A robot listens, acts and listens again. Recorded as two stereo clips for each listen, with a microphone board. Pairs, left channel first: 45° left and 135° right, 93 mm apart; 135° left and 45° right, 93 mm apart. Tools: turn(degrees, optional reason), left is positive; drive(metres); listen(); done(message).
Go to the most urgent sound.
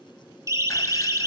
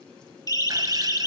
turn(degrees=175, reason="The siren: 175° left.")
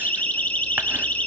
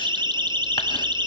turn(degrees=-25, reason="The siren is now 25° right.")
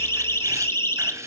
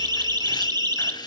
turn(degrees=-10, reason="The siren is now 10° right.")
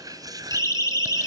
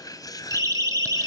drive(metres=1.0)
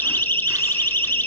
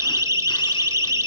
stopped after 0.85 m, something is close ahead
turn(degrees=-10, reason="The siren is now 10° right.")
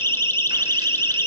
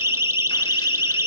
done("Arrived at the siren, straight ahead.")